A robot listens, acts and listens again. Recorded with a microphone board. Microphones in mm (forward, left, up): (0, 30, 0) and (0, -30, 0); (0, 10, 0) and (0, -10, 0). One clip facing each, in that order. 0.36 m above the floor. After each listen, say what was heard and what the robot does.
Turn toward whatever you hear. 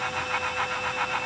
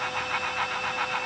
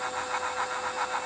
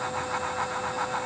Keep listening.
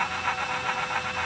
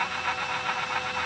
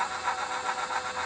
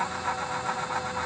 Keep listening.
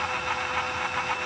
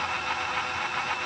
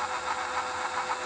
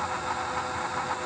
I can't make out anything.